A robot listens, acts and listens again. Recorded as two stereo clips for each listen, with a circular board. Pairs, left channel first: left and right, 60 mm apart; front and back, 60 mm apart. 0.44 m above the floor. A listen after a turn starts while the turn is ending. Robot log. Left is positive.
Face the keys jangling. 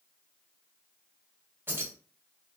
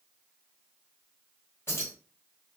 note: The keys jangling: 40° right.
cmd yaw -40
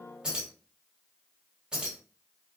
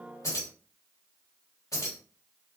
note: The keys jangling is now 15° right.
cmd yaw -15
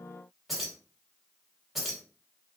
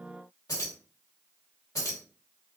end: Found it: keys jangling, straight ahead.